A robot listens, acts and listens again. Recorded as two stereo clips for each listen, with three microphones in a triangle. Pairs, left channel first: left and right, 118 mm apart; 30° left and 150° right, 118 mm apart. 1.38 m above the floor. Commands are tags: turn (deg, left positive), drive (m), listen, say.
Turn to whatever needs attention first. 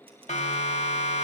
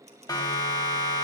<turn deg="85"/>
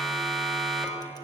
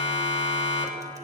<say>Facing the siren, 2 to 4 m away.</say>